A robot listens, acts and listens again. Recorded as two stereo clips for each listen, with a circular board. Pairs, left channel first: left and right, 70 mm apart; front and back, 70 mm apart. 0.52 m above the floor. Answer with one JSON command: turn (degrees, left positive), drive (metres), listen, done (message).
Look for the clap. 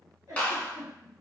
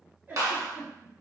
{"turn": 155}
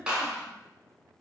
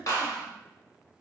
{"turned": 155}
{"turn": -15}
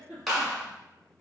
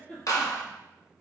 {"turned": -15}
{"done": "Found it: a clap, straight ahead."}